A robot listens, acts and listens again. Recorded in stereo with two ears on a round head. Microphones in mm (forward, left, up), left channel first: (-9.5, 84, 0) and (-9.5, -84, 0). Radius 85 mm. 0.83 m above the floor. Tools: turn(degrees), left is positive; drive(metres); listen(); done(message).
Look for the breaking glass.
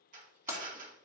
turn(degrees=-15)
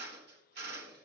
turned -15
listen()
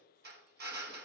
done("I heard breaking glass, but can't make it out now. It was about straight ahead or 150° right.")